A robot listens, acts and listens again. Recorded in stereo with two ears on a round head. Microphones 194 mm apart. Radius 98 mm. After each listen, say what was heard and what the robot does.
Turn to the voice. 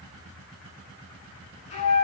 Keep listening.
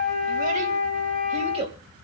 The child speaking: about 25° right or 155° right. Turn 25° right.
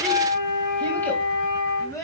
So it is at 15° left. Turn 15° left.
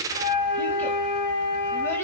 Keep listening.
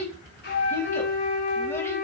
The child speaking is now 10° left. Turn 10° left.
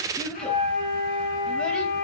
Found it: a child speaking, straight ahead.